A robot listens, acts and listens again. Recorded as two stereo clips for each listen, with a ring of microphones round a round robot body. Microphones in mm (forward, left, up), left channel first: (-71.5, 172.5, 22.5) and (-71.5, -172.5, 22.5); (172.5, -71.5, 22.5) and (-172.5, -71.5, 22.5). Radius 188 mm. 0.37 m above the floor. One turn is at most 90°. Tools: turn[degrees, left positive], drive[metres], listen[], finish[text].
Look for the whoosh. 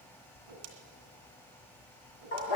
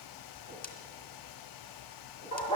Thought: The whoosh: 65° right.
Action: turn[-65]
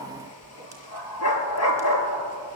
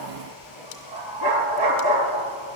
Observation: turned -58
Action: finish[Facing the whoosh, 2 to 4 m away.]